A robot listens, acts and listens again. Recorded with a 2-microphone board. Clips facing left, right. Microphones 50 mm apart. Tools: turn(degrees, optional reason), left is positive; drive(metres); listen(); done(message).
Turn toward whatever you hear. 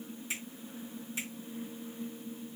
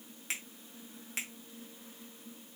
turn(degrees=-75, reason="The finger snap: about 75° right or 105° right.")
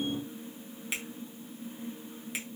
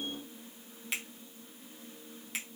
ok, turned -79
done("Found it: a finger snap, straight ahead.")